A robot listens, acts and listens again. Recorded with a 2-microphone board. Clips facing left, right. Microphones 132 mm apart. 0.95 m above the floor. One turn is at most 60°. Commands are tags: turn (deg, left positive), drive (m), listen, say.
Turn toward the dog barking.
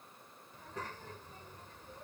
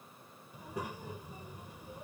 <listen/>
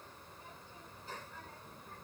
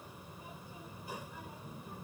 <listen/>
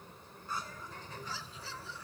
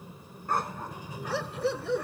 <turn deg="-60"/>
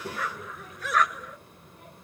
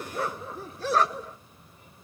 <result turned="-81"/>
<turn deg="-30"/>
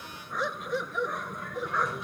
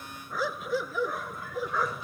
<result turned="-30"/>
<say>Found it: a dog barking, straight ahead.</say>